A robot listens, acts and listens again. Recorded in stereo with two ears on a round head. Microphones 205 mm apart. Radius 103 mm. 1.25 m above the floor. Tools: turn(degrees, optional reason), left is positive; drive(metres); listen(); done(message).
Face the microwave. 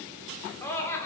listen()
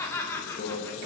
turn(degrees=45, reason="The microwave: about 45° left or 135° left.")
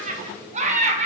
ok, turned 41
listen()
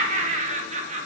listen()
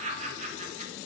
done("I heard a microwave, but can't make it out now. It was about 5° left or 95° left.")